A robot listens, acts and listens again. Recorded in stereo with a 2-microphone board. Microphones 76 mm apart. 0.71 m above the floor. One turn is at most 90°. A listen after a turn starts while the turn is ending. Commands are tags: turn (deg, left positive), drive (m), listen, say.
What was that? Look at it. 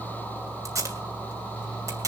<turn deg="-45"/>
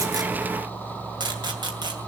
<turn deg="-85"/>
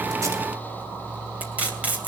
<turn deg="-20"/>
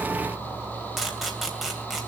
<say>Found it: tape being pulled, straight ahead.</say>